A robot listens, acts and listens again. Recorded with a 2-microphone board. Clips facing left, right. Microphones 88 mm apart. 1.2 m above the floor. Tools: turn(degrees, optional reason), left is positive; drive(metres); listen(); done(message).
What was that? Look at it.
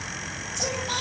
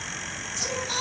turn(degrees=60, reason="The singing: about 60° left or 120° left.")
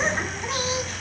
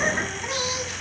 done("Found it: singing, straight ahead.")